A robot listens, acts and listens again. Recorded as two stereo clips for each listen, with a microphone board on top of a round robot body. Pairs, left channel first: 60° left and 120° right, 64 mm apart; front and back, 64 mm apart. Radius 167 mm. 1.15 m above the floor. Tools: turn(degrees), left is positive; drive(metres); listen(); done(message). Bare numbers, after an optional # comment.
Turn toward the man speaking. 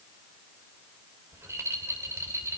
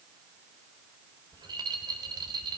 listen()
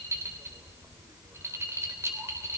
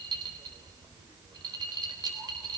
listen()
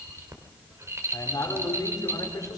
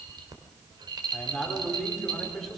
# The man speaking: 85° left.
turn(85)
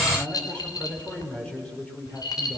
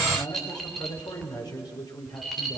# The man speaking is now 15° right.
turn(-15)
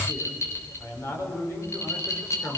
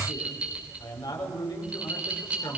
done("Found it: a man speaking, straight ahead, over 4 m away.")